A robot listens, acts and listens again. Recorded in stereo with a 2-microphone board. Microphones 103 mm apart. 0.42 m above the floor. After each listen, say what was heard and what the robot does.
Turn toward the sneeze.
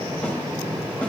Keep listening.
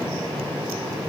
Keep listening.
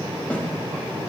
I can't make out a sneeze.